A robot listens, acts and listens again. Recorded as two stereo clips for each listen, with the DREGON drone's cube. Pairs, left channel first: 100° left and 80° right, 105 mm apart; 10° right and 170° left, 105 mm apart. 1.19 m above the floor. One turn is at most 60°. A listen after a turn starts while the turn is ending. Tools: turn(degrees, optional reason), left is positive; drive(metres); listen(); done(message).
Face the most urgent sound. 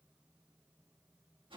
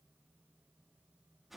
listen()
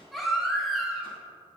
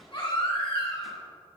turn(degrees=10, reason="The baby crying: 10° left.")
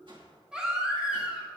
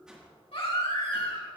done("Facing the baby crying, 2 to 4 m away.")